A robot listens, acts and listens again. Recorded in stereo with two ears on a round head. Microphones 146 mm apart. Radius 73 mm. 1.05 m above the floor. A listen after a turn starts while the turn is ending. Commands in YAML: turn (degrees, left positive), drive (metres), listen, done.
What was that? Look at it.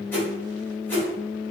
turn: 30
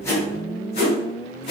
turn: 135
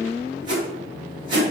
turn: -35
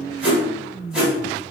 done: "Facing the whoosh, 1 to 2 m away."